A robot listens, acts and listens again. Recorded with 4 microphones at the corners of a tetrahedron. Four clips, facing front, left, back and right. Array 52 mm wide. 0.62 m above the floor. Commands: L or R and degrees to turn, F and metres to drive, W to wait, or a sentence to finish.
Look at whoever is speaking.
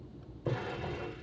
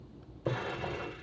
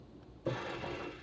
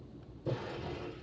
W
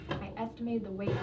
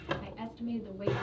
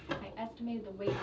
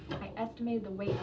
R60
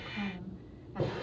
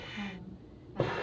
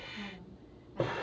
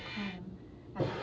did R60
R20
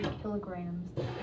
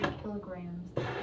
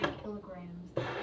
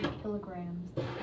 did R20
Facing the woman speaking.